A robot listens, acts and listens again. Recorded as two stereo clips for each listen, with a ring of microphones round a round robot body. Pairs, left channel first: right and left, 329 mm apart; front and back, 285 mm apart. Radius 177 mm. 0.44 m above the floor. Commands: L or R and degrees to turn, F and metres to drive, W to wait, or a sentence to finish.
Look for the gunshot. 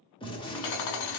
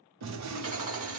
R165
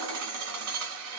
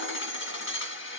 Facing where the gunshot came from. I can't hear it now.